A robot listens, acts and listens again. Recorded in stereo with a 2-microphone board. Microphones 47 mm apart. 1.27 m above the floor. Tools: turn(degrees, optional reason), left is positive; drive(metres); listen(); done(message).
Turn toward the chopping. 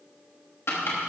turn(degrees=65, reason="The chopping: about 65° left or 115° left.")
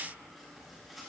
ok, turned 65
listen()
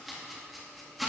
done("Found it: chopping, straight ahead, 2 to 4 m away.")